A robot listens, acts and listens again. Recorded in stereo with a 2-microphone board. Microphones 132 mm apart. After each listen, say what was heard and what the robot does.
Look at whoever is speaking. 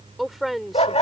Turn 30° left.
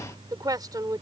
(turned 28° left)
So it is at 30° right. Turn 30° right.
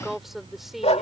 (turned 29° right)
Found it: a woman speaking, straight ahead.